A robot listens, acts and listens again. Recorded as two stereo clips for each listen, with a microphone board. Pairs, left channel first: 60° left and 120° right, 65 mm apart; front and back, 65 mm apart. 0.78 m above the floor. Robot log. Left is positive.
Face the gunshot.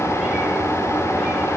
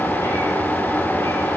cmd idle
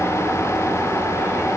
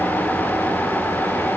cmd idle
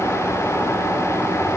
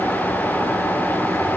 end: I can't make out a gunshot to turn to.